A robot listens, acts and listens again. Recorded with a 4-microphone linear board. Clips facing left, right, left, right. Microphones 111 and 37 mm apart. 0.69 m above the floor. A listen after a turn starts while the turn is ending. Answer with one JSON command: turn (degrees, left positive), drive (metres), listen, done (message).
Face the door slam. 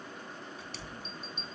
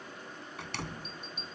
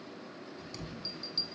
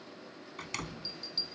{"turn": -90}
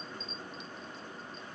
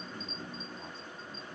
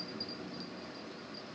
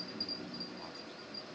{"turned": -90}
{"done": "I heard a door slam from this way, but can't make it out now."}